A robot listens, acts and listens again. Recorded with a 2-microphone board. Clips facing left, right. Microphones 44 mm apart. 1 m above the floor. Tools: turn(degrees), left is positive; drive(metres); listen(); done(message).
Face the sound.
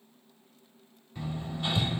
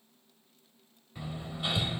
turn(degrees=-30)
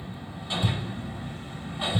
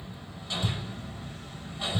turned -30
turn(degrees=20)
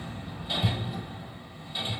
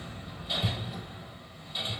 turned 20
done("Facing the hammering.")